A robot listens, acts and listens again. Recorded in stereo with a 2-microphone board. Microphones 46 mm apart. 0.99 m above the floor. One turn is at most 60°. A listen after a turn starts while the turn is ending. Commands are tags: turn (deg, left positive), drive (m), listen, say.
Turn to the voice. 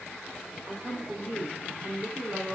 <turn deg="-40"/>
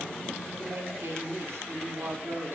<turn deg="-60"/>
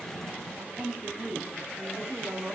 <turn deg="-60"/>
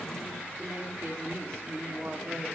<turn deg="-60"/>
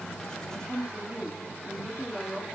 <turn deg="-10"/>
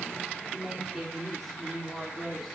<say>Facing the woman speaking, 2 to 4 m away.</say>